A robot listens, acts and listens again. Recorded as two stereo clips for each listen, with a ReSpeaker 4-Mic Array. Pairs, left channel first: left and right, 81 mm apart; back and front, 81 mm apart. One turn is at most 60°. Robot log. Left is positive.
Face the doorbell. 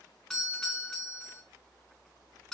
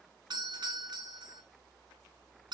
end: Facing the doorbell, 1 to 2 m away.